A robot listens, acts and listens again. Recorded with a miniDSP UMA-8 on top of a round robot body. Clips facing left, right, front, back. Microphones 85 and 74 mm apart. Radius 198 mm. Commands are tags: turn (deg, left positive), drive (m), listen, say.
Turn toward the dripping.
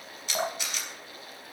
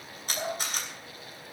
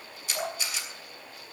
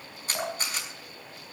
<turn deg="105"/>
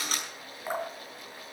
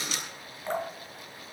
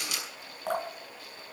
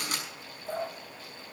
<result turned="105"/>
<turn deg="10"/>
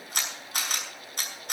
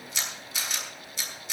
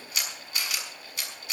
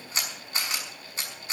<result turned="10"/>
<listen/>
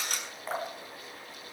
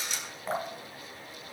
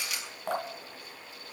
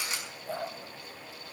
<say>Found it: dripping, straight ahead, 2 to 4 m away.</say>